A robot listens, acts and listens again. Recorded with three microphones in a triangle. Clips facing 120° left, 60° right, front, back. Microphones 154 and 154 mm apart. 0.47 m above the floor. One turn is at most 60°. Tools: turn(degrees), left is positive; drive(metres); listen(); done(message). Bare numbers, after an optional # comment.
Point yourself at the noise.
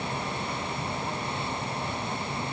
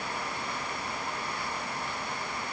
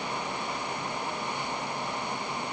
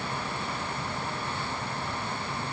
listen()
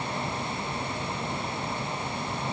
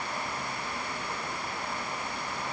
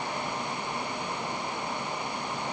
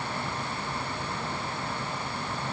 listen()
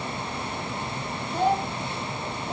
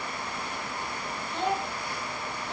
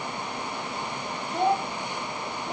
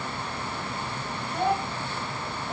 # The child speaking: 70° left.
turn(60)
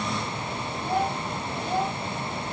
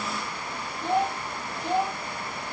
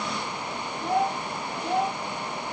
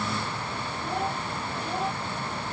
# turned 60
# The child speaking is now 10° left.
turn(10)
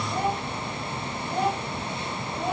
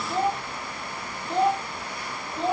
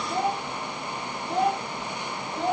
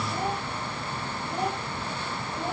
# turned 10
done("Found it: a child speaking, straight ahead.")